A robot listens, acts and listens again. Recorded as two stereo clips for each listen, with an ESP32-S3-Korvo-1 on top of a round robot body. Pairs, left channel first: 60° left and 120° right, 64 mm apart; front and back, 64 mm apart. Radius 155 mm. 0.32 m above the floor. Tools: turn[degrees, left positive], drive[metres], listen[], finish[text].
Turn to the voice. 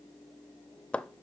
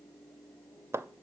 Action: listen[]
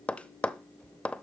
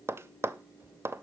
Action: listen[]
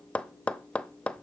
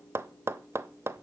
Action: finish[I can't make out anyone speaking, only tapping.]